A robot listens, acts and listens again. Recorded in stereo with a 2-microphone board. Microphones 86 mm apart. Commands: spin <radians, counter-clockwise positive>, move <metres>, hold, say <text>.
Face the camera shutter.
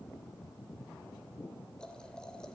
hold
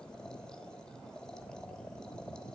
hold
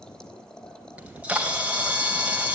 spin -0.52
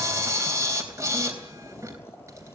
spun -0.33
spin -2.53
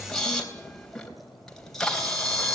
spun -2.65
say Facing the camera shutter, 2 to 4 m away.